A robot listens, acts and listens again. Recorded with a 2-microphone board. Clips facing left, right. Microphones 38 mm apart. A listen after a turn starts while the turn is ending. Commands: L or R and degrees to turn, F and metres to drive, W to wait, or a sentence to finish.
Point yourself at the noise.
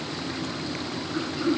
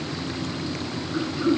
R30
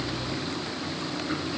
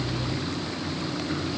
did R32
W
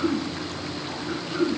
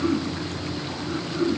L20
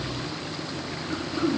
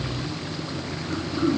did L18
Found it: throat clearing, straight ahead.